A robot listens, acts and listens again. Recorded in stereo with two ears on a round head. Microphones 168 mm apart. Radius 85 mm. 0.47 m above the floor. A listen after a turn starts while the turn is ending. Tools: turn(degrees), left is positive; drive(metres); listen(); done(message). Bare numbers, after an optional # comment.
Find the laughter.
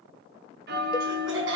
# The laughter: about 70° right or 110° right.
turn(-70)
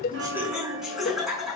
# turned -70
done("Facing the laughter, over 4 m away.")